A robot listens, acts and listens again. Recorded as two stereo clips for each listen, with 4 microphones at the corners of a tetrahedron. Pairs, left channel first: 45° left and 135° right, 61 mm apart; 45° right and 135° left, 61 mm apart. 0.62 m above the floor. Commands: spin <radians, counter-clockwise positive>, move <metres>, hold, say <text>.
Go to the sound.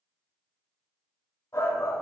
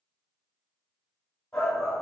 spin 0.61
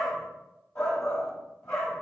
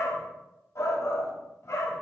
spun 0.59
move 1.0
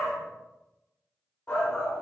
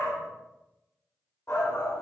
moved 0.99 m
move 1.0
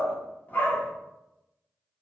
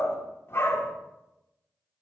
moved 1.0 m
spin -0.17
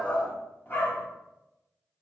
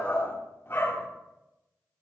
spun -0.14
move 1.0
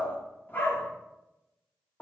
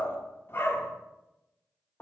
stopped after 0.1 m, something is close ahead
say Arrived at the shout, straight ahead.